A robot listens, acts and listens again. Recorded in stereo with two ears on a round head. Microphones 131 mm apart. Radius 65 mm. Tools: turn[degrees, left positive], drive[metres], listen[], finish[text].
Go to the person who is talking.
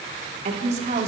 Thought: The woman speaking: about 45° right or 135° right.
Action: turn[-45]
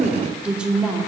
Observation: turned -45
Action: drive[1.0]
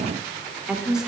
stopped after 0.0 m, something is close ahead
Action: finish[Blocked. The woman speaking is further on, straight ahead.]